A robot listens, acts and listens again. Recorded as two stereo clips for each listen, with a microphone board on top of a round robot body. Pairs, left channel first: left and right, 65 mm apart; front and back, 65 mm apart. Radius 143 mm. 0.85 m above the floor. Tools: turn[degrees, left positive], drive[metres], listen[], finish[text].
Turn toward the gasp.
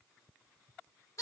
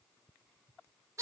Action: listen[]
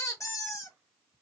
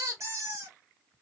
Action: listen[]
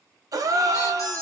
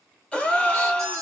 Thought: The gasp: 75° right.
Action: turn[-75]
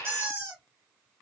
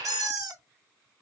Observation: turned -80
Action: finish[Facing where the gasp came from. I can't hear it now.]